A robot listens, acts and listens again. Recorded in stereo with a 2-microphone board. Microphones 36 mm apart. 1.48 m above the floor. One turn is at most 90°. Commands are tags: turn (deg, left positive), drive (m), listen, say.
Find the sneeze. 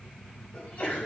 <turn deg="50"/>
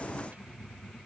<listen/>
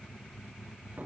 <say>I heard a sneeze, but can't make it out now. It was about straight ahead or 80° left.</say>